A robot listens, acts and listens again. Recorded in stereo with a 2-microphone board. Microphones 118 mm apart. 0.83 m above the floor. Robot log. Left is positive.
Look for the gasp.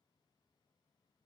cmd idle
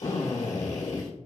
cmd idle
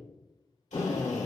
end: I can't make out a gasp, only a drill.